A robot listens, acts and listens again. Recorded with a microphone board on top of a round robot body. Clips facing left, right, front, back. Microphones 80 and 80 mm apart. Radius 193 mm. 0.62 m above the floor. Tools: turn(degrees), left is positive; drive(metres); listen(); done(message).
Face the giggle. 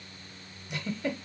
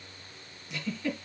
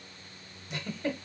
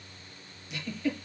turn(degrees=55)
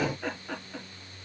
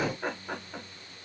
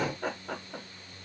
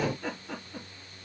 turn(degrees=-15)
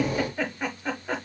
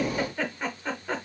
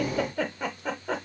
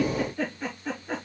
done("Facing the giggle.")